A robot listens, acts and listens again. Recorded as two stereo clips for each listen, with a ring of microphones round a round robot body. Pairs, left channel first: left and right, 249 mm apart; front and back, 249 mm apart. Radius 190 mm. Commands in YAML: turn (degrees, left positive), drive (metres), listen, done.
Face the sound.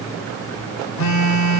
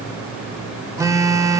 turn: 100
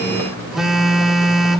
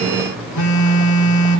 done: "Found it: a phone buzzing, straight ahead, 1 to 2 m away."